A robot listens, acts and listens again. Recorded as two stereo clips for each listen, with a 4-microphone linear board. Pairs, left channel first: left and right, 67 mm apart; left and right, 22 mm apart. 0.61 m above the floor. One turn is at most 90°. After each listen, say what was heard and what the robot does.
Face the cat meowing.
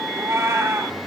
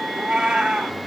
The cat meowing: about 45° right or 135° right. Turn 45° right.
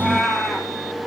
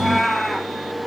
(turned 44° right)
Facing the cat meowing, over 4 m away.